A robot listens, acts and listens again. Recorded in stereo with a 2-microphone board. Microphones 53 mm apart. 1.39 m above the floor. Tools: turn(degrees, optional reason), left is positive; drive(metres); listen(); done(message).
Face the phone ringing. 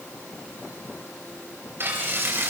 listen()
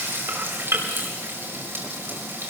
listen()
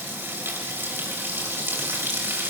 done("I can't make out a phone ringing, only frying.")